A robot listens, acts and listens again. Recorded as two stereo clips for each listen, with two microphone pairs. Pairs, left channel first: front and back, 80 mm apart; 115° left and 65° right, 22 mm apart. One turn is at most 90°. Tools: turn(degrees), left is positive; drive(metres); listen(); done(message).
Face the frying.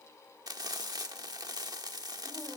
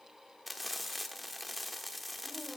turn(degrees=-90)
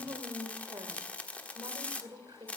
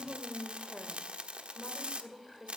turn(degrees=-70)
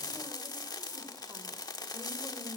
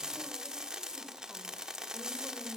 turn(degrees=-20)
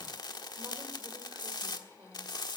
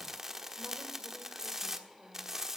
done("Found it: frying, straight ahead, 1 to 2 m away.")